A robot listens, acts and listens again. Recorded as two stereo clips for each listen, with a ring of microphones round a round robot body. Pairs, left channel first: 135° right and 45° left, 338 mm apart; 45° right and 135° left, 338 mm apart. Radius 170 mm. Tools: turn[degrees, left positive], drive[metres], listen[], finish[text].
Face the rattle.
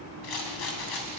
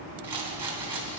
Thought: The rattle: 140° right.
Action: turn[-140]
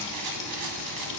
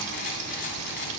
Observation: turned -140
Thought: The rattle is now 20° left.
Action: turn[20]
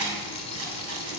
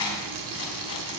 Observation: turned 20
Action: finish[Facing the rattle.]